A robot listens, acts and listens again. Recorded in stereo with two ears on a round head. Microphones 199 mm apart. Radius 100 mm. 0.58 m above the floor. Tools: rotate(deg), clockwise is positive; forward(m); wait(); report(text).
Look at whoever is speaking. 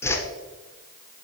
wait()
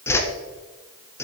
wait()
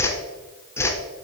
report("I can't make out anyone speaking to turn to.")